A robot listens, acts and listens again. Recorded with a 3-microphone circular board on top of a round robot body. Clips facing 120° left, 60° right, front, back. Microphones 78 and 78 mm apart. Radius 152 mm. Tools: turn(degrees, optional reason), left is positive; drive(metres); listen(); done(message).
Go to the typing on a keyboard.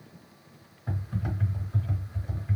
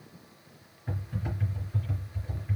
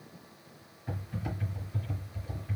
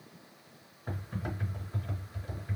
turn(degrees=135, reason="The typing on a keyboard: 135° left.")
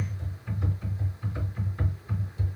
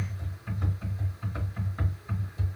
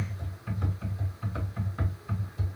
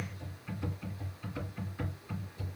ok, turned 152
turn(degrees=-15, reason="The typing on a keyboard is now 15° right.")
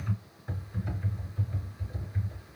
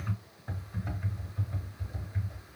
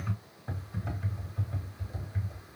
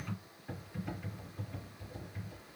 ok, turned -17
drive(metres=1.0)
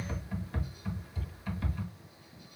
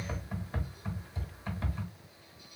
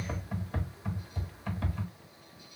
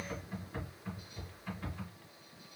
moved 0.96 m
drive(metres=1.0)
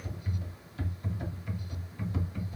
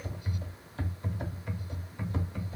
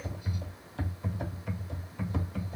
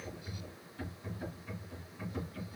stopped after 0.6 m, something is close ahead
done("Arrived at the typing on a keyboard, straight ahead.")